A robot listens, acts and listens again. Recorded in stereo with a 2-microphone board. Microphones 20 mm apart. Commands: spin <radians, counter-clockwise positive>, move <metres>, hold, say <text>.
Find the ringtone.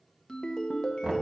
spin 0.79
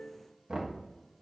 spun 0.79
spin 1.57
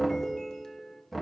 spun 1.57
spin 0.61
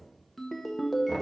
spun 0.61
spin 0.17
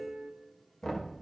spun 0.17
say Found it: a ringtone, straight ahead, under 1 m away.